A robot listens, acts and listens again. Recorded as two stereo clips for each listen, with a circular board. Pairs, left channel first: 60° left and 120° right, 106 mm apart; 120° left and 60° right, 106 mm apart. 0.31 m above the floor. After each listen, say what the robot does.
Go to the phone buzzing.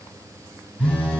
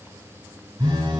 Turn 20° right.
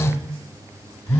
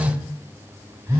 Drive 1.0 m forward.
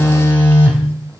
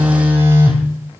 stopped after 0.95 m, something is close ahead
Arrived at the phone buzzing, straight ahead.